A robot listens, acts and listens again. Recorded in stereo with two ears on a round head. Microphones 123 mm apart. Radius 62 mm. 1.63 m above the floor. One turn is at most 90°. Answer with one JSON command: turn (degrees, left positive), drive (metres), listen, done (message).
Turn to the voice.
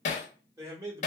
{"turn": -25}
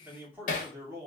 {"turn": -25}
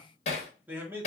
{"turn": -20}
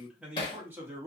{"turn": -20}
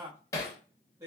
{"turn": -20}
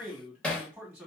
{"turn": -10}
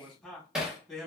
{"done": "Found it: a man speaking, straight ahead."}